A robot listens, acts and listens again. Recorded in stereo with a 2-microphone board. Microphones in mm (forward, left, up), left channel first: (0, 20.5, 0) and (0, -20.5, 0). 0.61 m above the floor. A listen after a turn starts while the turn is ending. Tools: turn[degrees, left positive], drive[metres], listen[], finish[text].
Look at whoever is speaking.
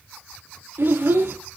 Thought: The child speaking: about 65° right or 115° right.
Action: turn[-65]
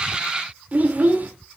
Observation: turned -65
Thought: So it is at 40° right.
Action: turn[-40]
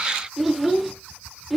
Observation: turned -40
Action: finish[Facing the child speaking.]